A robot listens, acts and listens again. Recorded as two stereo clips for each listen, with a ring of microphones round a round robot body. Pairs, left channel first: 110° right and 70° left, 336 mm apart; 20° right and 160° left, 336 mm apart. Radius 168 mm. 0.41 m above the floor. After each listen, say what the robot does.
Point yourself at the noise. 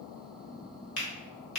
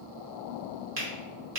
Turn 160° right.
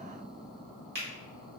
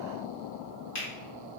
Turn 10° left.
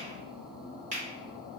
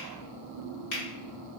Found it: a finger snap, straight ahead.